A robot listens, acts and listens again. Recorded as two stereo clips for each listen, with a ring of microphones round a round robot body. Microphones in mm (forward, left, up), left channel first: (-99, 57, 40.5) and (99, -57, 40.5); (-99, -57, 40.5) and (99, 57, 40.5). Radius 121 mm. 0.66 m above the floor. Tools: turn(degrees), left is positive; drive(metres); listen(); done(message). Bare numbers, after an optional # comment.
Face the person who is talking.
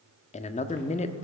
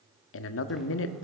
# The man speaking: 155° right.
turn(-155)
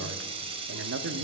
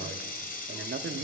# The man speaking is now 10° right.
turn(-10)
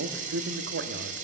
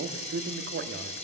done("Found it: a man speaking, straight ahead, 1 to 2 m away.")